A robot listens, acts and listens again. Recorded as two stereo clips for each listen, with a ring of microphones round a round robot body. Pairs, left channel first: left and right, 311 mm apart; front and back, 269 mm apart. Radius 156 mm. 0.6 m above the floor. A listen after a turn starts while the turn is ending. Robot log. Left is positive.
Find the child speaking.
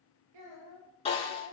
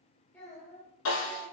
note: The child speaking: 85° right.
cmd yaw -85
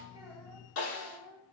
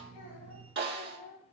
note: The child speaking is now 25° left.
cmd yaw +25
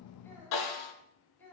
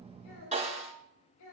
end: Found it: a child speaking, straight ahead, over 4 m away.